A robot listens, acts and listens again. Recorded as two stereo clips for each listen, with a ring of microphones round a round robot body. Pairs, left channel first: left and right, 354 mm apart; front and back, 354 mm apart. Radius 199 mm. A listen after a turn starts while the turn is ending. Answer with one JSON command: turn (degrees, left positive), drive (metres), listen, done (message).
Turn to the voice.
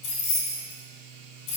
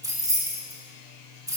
{"listen": true}
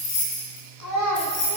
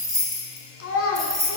{"turn": 55}
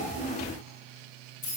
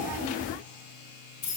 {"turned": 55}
{"listen": true}
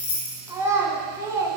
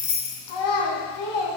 {"turn": -10}
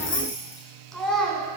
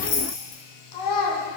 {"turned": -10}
{"done": "Found it: a child speaking, straight ahead, 2 to 4 m away."}